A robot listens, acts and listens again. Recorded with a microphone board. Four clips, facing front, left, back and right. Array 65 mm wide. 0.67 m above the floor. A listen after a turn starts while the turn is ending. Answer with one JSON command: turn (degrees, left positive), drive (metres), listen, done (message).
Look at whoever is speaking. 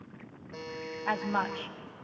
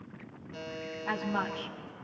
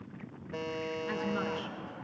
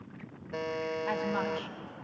{"done": "Found it: a woman speaking, straight ahead."}